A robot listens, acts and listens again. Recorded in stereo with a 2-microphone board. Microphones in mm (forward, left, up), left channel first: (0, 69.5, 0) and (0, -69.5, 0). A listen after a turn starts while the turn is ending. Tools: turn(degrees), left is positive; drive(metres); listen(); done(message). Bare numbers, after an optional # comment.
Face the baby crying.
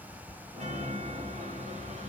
listen()
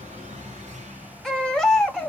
turn(30)
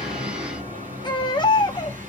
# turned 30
# So it is at 150° left.
turn(150)
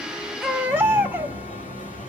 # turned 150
# The baby crying is now 15° right.
turn(-15)
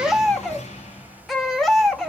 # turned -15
done("Found it: a baby crying, straight ahead.")